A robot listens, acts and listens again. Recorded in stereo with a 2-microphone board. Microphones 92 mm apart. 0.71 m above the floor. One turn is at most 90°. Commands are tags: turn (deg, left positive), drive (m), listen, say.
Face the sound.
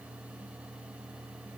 <listen/>
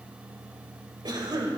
<turn deg="-50"/>
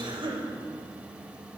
<turn deg="-75"/>
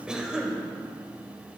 <turn deg="-10"/>
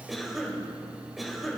<say>Facing the cough, 2 to 4 m away.</say>